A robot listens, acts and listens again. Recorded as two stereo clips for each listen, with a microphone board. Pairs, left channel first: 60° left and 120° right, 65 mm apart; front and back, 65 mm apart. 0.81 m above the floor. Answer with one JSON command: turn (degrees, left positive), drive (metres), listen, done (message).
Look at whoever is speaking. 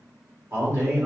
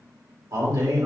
{"turn": -170}
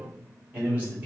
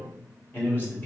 {"turn": -55}
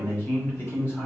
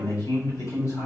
{"turn": 10}
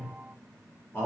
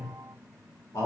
{"done": "Facing the man speaking, 2 to 4 m away."}